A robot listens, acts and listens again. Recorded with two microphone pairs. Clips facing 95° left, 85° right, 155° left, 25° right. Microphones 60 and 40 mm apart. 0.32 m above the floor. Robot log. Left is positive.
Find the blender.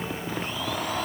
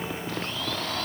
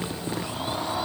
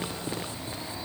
note: The blender: 170° left.
cmd yaw +170
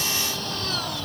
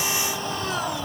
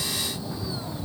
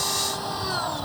note: The blender is now 15° right.
cmd yaw -15
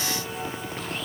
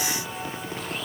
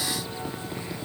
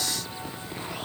cmd idle
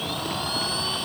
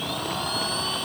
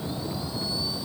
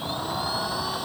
end: Found it: a blender, straight ahead.